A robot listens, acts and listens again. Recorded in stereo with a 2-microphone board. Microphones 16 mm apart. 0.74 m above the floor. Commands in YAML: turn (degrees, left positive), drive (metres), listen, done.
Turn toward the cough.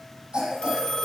turn: -60
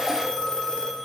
listen: true
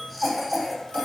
done: "Facing the cough, over 4 m away."